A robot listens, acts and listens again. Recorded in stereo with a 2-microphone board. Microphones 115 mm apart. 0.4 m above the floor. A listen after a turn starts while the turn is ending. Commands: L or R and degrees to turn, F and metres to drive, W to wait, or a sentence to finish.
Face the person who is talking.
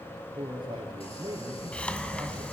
R40
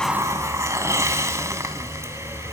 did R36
W
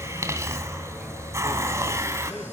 W
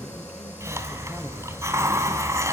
I heard a man speaking, but can't make it out now. It was about 5° right or 105° right.